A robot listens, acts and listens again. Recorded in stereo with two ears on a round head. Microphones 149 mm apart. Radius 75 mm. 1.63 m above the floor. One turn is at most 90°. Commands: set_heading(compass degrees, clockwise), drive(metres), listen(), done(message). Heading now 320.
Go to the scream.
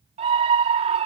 set_heading(0)
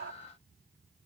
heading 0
listen()
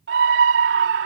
set_heading(90)
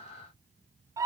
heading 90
set_heading(110)
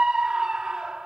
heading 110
drive(1.0)
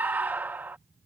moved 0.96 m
set_heading(120)
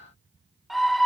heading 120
drive(1.0)
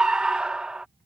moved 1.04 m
drive(1.0)
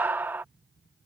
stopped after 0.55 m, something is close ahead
set_heading(130)
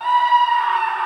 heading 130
done("Arrived at the scream, straight ahead.")